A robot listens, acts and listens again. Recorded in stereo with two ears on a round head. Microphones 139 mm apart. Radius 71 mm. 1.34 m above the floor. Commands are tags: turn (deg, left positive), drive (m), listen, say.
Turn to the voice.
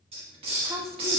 <turn deg="-20"/>
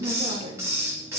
<turn deg="-140"/>
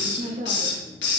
<turn deg="-45"/>
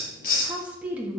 <turn deg="-10"/>
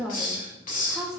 <say>Facing the woman speaking.</say>